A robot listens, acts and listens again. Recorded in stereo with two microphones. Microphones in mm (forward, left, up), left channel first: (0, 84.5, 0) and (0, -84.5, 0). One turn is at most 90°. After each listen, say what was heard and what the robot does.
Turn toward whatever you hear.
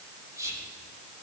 The whispering: about 20° right or 160° right. Turn 20° right.
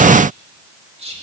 So it is at 140° right. Turn 90° right.
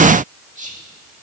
The whispering is now 50° right. Turn 50° right.
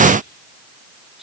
Found it: whispering, straight ahead.